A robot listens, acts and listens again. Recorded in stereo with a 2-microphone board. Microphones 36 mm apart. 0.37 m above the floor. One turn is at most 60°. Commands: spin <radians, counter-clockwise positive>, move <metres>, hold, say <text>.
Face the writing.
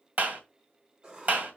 spin -0.44
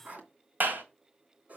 spin -1.05
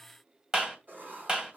spin -0.96
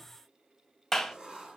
spin -0.44
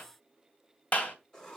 spin 0.35
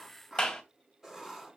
say Facing the writing, 2 to 4 m away.